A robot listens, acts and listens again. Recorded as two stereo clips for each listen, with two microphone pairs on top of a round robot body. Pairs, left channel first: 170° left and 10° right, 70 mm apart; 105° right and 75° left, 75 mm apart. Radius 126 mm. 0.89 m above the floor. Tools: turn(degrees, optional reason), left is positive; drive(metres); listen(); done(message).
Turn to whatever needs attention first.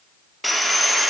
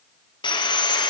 listen()
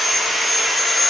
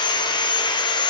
listen()
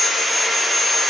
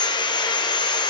done("I can't make out anything urgent, only sawing.")